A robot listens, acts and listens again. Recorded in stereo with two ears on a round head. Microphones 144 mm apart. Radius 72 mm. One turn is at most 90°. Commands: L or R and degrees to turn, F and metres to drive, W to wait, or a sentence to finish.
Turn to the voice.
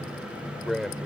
L30
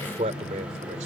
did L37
R45
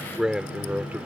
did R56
R10
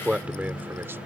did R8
R10
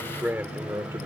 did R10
R15
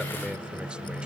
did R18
W
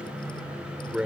Found it: a man speaking, straight ahead.